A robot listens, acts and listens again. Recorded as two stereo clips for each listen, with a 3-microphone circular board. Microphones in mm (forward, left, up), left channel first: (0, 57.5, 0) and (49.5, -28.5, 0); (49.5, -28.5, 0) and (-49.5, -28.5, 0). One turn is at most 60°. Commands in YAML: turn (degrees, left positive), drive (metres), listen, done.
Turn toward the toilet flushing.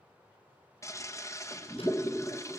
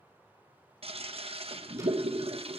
turn: 60
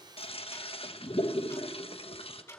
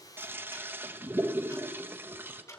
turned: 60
turn: 60
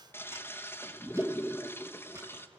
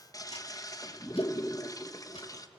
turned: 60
turn: 55
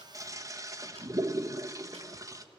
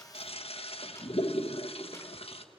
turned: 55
done: "Facing the toilet flushing."